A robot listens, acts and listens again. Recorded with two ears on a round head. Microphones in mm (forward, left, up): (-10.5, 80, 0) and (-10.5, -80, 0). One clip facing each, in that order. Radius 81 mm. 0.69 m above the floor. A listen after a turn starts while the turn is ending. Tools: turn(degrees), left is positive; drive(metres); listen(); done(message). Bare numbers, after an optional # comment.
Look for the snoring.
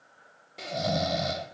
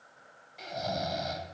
# The snoring: about 50° left or 130° left.
turn(50)
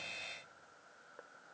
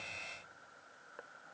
listen()
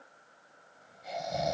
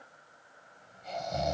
done("Facing the snoring, 1 to 2 m away.")